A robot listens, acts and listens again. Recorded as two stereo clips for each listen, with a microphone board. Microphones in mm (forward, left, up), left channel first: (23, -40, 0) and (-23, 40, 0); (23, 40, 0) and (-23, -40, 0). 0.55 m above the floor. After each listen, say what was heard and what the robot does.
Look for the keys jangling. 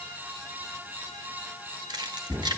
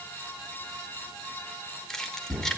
The keys jangling: 145° left. Turn 145° left.
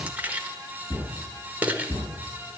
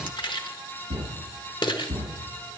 The keys jangling is now 50° left. Turn 50° left.
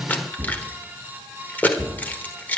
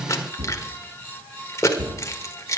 The keys jangling is now 10° left. Turn 10° left.
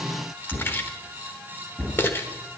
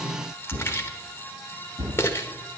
Facing the keys jangling, 1 to 2 m away.